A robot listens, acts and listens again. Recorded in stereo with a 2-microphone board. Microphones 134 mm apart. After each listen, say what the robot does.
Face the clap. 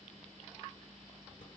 Keep listening.
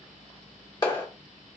Turn 30° left.
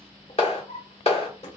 Turn 115° left.
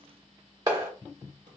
Turn 35° right.
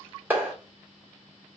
Turn 20° right.
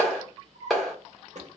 Facing the clap.